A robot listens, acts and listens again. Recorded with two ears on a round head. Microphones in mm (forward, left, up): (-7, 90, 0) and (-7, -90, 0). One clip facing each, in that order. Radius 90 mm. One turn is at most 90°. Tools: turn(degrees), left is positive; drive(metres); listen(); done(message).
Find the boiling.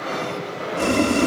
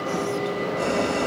turn(degrees=35)
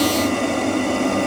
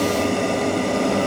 done("Found it: boiling, straight ahead.")